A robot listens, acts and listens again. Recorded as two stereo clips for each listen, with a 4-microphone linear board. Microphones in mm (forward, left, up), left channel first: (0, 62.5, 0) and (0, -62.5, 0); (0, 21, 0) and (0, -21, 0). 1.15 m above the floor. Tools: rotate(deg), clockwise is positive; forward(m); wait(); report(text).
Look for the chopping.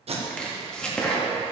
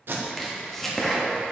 rotate(-30)
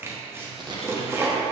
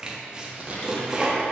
rotate(20)
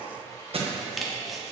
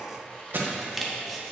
report("Facing the chopping, under 1 m away.")